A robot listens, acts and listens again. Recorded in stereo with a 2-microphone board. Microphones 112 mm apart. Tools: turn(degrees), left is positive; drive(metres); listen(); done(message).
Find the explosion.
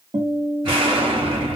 turn(degrees=-45)
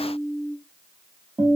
listen()
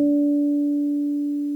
done("I heard an explosion, but can't make it out now. It was about straight ahead or 90° right.")